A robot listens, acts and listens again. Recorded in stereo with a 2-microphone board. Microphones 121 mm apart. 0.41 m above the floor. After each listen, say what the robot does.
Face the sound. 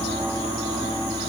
Keep listening.
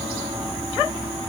Keep listening.
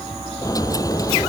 Turn 30° left.
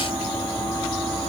Keep listening.
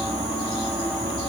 I heard a dropped coin, but can't make it out now. It was about straight ahead or 120° left.